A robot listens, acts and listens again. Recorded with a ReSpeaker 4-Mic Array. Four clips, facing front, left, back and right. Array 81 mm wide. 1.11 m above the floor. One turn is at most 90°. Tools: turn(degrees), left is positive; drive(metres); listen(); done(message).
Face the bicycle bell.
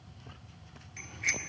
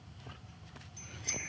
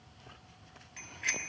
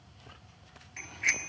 turn(degrees=-90)
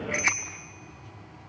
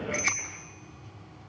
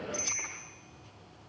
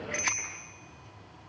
turn(degrees=-25)
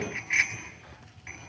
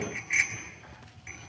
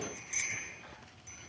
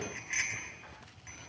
done("Facing the bicycle bell.")